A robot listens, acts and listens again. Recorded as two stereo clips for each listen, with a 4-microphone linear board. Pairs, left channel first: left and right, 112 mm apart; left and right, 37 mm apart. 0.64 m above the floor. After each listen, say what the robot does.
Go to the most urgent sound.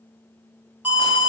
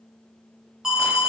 Turn 30° right.
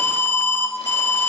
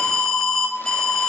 Turn 15° left.
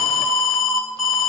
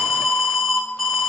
Drive 1.0 m forward.
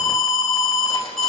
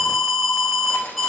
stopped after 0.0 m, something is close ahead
Blocked. The alarm is further on, straight ahead.